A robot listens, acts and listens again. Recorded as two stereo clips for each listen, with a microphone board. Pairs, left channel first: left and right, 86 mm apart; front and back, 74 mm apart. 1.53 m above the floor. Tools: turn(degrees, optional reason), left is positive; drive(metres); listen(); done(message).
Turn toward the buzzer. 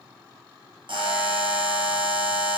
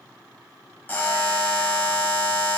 turn(degrees=-65, reason="The buzzer: 65° right.")
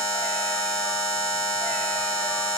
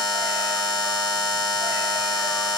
turn(degrees=-35, reason="The buzzer is now 35° right.")
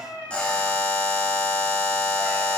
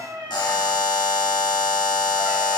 turn(degrees=15, reason="The buzzer is now 15° left.")
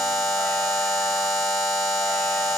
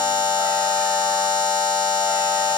done("Facing the buzzer, 1 to 2 m away.")